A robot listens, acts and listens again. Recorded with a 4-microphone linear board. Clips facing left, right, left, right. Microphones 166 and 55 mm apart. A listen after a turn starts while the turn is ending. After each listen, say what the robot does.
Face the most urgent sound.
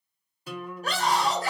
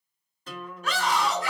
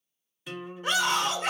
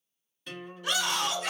Turn 40° left.
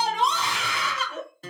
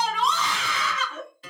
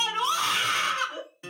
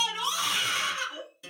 Turn 95° left.
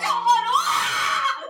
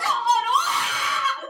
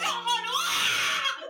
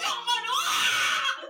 Turn 15° right.
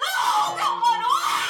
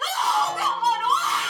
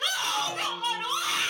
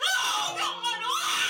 Facing the scream.